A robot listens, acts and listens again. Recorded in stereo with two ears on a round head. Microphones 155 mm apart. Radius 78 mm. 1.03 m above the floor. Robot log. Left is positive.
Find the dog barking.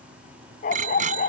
note: The dog barking: about 50° left or 130° left.
cmd yaw +50
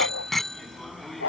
note: So it is at 80° left.
cmd yaw +80
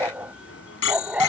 end: Facing the dog barking.